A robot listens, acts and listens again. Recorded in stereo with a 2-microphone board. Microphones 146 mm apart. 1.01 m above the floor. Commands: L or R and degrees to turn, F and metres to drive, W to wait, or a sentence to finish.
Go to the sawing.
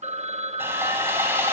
R15
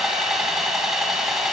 F1.0
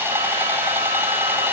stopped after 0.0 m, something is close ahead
R15
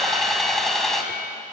Blocked. The sawing is further on, straight ahead.